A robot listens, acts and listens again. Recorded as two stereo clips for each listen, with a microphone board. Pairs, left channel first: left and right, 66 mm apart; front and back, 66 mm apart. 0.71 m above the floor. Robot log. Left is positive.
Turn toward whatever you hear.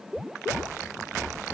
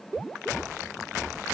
cmd idle
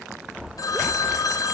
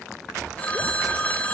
note: The phone ringing: 65° left.
cmd yaw +65
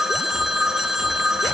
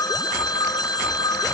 end: Found it: a phone ringing, straight ahead, 2 to 4 m away.